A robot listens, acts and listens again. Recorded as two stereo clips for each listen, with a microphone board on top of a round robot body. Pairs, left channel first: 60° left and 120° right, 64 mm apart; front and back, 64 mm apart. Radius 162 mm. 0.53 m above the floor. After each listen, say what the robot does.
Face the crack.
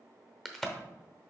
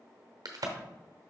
Turn 145° left.
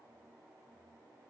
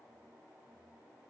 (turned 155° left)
Turn 10° right.
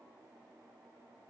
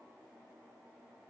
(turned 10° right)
I heard a crack from this way, but can't make it out now.